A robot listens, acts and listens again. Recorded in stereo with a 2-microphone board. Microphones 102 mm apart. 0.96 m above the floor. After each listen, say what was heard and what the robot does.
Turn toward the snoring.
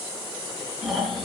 Turn 30° right.
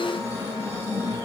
So it is at 25° left. Turn 25° left.
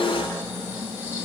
The snoring is now 20° right. Turn 20° right.
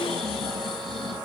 Found it: snoring, straight ahead.